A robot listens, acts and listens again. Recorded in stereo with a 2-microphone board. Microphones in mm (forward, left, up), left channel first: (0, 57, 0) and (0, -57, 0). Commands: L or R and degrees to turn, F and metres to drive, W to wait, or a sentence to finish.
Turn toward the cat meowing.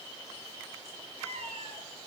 R90
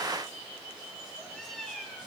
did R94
Facing the cat meowing.